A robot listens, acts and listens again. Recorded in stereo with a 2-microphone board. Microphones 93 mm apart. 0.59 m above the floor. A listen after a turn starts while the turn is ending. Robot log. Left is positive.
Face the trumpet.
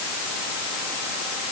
cmd idle
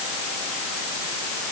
cmd idle
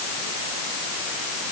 end: I can't make out a trumpet.